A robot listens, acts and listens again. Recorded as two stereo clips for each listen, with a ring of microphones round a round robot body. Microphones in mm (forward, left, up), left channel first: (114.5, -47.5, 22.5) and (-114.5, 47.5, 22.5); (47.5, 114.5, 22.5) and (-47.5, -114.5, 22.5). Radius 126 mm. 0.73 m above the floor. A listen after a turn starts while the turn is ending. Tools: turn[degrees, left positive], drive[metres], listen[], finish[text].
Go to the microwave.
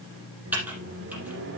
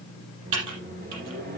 Thought: The microwave: 165° right.
Action: turn[-165]
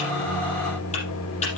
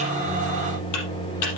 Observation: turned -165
Action: drive[1.0]
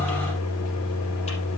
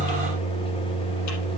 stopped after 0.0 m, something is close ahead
Action: finish[Something is in my way. I am facing the microwave but have not reached it.]